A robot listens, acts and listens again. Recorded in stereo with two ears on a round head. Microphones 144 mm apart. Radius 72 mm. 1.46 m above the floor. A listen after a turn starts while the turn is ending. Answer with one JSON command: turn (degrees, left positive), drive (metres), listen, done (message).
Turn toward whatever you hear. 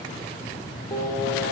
{"turn": 25}
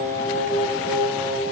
{"turn": 120}
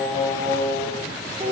{"turn": -35}
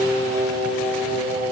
{"done": "Facing the singing."}